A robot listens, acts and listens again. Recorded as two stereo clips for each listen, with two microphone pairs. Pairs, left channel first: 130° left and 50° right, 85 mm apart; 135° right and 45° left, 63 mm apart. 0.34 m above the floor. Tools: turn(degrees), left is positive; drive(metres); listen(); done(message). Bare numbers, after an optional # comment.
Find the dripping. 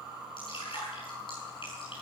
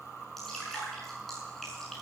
# The dripping: 140° left.
turn(140)
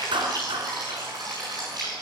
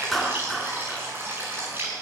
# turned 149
done("Facing the dripping, over 4 m away.")